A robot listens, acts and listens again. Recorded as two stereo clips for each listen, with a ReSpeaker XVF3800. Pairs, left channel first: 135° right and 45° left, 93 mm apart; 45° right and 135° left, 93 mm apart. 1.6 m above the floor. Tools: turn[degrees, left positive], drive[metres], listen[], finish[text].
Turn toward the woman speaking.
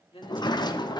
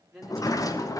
Thought: The woman speaking: 135° right.
Action: turn[-135]
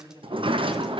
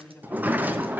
Thought: The woman speaking is now 35° left.
Action: turn[35]
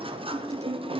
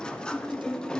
Action: listen[]
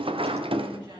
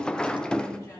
Action: listen[]
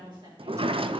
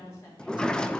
Thought: The woman speaking is now 15° left.
Action: turn[15]
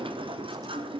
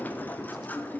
Action: listen[]
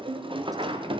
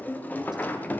Action: listen[]
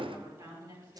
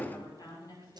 Action: finish[Found it: a woman speaking, straight ahead, over 4 m away.]